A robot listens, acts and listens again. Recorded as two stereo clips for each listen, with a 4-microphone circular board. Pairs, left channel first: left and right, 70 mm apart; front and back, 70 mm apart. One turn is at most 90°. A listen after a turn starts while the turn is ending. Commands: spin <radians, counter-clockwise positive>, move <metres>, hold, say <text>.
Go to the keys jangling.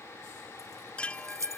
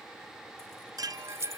spin -1.57
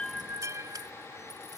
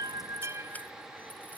spin -0.70
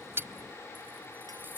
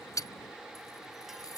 spin -0.52
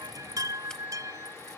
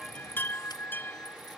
hold
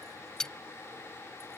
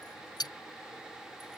move 1.0
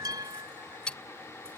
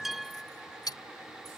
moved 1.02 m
spin 0.26
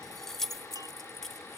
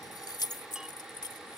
move 1.0
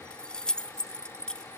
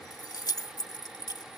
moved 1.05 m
spin 0.26
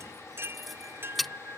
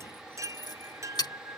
move 1.0
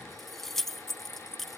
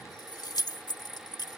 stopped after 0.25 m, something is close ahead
say I am next to the keys jangling.